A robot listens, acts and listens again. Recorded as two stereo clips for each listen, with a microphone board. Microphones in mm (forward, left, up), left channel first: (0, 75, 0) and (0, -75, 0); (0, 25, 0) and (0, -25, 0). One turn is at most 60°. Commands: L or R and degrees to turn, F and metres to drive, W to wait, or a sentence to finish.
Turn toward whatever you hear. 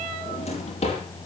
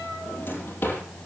L45
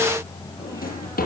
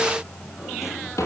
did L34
L60
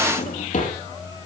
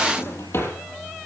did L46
L60
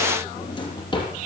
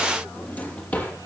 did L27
L30
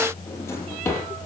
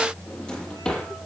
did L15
L15
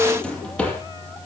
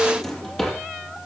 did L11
Found it: a drawer, straight ahead, over 4 m away.